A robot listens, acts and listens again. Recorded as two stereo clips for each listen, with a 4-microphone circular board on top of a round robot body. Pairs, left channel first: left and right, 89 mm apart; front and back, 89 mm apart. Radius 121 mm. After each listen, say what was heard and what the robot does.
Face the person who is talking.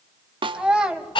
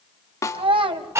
The child speaking: 170° right. Turn 170° right.
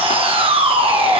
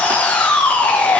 Keep listening.
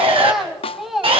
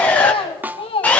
Found it: a child speaking, straight ahead.